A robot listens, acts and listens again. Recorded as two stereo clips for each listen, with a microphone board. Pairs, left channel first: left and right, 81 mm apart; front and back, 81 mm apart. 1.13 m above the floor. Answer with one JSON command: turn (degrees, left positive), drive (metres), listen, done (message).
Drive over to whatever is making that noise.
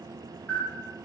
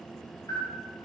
{"turn": 30}
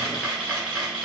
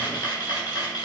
{"turn": -15}
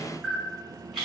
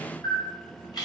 {"drive": 1.0}
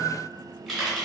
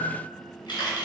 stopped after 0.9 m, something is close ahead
{"done": "I am next to the camera shutter."}